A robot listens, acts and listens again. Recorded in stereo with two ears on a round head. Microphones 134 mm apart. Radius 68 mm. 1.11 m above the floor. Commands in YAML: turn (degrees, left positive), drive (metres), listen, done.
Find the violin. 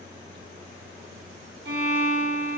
turn: -90
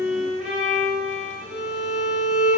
done: "Facing the violin."